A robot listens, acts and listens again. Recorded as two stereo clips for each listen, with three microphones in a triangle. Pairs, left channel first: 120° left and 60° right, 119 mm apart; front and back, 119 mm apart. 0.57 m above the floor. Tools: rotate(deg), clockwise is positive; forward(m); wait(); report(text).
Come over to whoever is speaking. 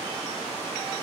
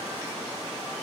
wait()
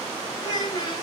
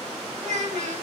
rotate(-175)
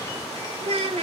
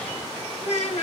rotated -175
rotate(25)
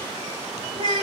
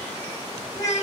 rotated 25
rotate(15)
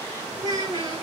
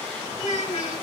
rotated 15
forward(1.0)
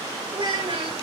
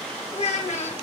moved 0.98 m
rotate(15)
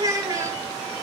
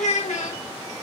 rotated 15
forward(1.0)
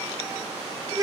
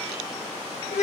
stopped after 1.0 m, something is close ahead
report("I am next to the child speaking.")